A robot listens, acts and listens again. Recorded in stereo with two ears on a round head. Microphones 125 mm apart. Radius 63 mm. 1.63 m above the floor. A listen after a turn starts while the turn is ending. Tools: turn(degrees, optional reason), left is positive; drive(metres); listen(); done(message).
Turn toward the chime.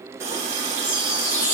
turn(degrees=60, reason="The chime: about 60° left or 120° left.")
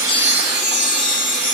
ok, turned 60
turn(degrees=45, reason="So it is at 45° left.")
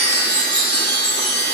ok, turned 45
turn(degrees=15, reason="The chime is now 15° left.")
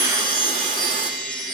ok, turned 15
done("Facing the chime, 2 to 4 m away.")